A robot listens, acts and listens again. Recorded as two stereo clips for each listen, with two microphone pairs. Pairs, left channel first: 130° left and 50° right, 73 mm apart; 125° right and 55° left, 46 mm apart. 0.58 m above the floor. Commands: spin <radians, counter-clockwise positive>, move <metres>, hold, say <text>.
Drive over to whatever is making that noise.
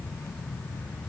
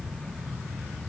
hold
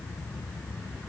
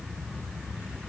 hold
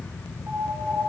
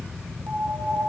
spin 0.17
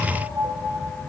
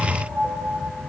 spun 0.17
move 1.0
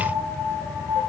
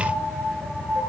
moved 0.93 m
move 1.0
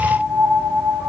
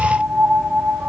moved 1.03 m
move 1.0
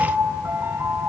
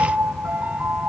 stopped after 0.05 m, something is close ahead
say Arrived at the piano, straight ahead.